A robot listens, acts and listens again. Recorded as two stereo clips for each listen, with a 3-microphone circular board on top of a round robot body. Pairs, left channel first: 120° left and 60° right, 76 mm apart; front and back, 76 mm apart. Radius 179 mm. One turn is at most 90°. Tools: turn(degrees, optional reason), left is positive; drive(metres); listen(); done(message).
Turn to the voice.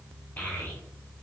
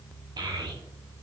turn(degrees=-90, reason="The child speaking: 175° right.")
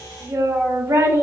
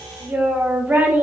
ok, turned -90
turn(degrees=-90, reason="The child speaking is now 110° right.")
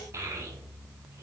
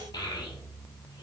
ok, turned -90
turn(degrees=-10, reason="The child speaking is now 10° right.")
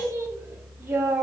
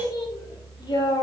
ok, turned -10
done("Facing the child speaking, under 1 m away.")